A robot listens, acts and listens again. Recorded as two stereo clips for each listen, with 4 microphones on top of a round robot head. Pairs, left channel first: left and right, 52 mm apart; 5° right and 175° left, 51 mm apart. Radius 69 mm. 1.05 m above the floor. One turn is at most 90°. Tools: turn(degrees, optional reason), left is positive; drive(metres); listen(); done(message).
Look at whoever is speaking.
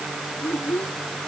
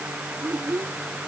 turn(degrees=90, reason="The child speaking: 135° left.")
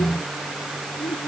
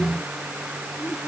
turn(degrees=45, reason="Nothing new. It was at 45° left.")
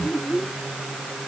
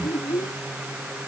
done("Found it: a child speaking, straight ahead.")